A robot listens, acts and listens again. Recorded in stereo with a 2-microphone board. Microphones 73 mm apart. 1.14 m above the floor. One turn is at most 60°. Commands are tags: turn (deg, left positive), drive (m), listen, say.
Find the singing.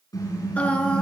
<turn deg="15"/>
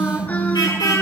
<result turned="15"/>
<listen/>
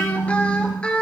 <turn deg="30"/>
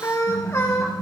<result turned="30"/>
<turn deg="60"/>
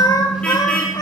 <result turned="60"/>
<turn deg="60"/>
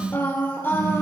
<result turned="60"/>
<turn deg="30"/>
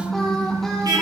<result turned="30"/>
<listen/>
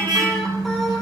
<listen/>
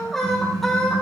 <say>Facing the singing.</say>